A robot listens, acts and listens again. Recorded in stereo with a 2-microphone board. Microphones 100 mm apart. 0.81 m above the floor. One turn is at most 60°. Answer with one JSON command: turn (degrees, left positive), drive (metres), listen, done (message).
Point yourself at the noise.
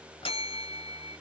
{"turn": 60}
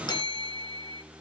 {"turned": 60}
{"turn": 50}
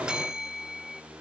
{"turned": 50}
{"turn": -10}
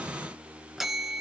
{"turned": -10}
{"done": "Facing the bell."}